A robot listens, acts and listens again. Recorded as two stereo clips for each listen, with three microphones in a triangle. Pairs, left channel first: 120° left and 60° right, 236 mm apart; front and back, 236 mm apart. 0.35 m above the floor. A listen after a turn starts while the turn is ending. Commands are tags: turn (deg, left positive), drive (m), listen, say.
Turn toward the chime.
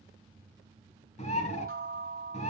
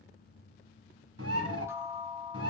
<turn deg="-100"/>
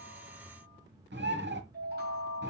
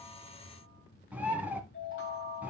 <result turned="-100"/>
<turn deg="-20"/>
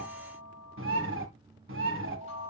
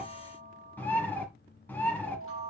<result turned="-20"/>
<say>Found it: a chime, straight ahead, 2 to 4 m away.</say>